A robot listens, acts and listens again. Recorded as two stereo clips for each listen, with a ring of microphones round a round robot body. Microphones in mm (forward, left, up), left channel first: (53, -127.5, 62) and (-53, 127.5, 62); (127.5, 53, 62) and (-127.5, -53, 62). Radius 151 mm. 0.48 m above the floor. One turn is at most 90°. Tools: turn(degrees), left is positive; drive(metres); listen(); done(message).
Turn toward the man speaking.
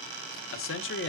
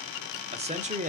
turn(degrees=-90)
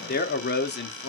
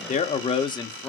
turn(degrees=-55)
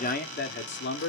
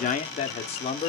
turn(degrees=-45)
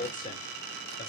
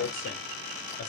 turn(degrees=-10)
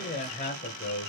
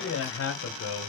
turn(degrees=-15)
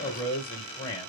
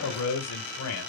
done("Found it: a man speaking, straight ahead.")